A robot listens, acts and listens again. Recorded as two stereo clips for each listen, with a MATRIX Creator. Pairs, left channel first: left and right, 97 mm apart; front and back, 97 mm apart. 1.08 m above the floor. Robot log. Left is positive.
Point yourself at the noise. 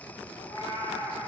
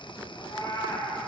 note: The cat meowing: 45° left.
cmd yaw +45
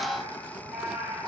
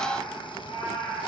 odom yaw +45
note: The cat meowing is now 10° right.
cmd yaw -10
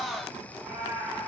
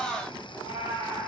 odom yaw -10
end: Found it: a cat meowing, straight ahead, over 4 m away.